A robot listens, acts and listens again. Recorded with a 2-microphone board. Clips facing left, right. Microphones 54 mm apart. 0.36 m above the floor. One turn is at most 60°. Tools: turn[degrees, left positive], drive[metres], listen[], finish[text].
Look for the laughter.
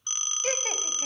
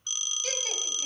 Thought: The laughter: about 35° left or 145° left.
Action: turn[35]
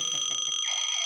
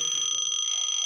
Action: listen[]
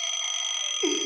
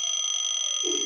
Thought: So it is at 110° left.
Action: turn[60]
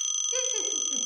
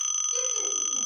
Thought: The laughter is now 40° left.
Action: turn[40]
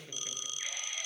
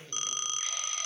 Action: listen[]
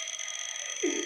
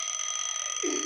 Thought: The laughter is now 15° left.
Action: turn[15]
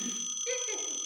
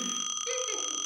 Action: listen[]
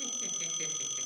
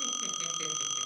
Action: listen[]
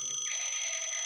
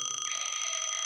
Action: finish[Facing where the laughter came from. I can't hear it now.]